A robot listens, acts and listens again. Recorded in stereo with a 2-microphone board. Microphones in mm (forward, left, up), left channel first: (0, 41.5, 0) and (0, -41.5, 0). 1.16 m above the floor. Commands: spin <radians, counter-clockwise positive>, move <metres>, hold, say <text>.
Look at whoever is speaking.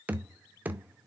hold
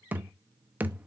hold
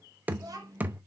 spin -0.70
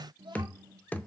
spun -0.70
spin -2.09
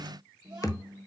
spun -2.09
spin -0.44
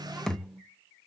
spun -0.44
say Facing the child speaking, 2 to 4 m away.